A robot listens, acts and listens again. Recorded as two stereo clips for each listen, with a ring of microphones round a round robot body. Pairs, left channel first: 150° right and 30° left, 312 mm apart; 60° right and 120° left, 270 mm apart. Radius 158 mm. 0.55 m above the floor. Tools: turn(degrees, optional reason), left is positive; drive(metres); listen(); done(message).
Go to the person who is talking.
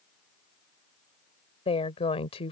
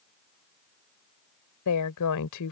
turn(degrees=-80, reason="The woman speaking: 80° right.")
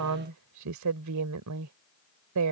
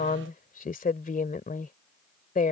drive(metres=1.0)
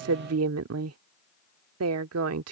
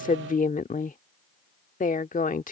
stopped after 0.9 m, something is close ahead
done("I am next to the woman speaking.")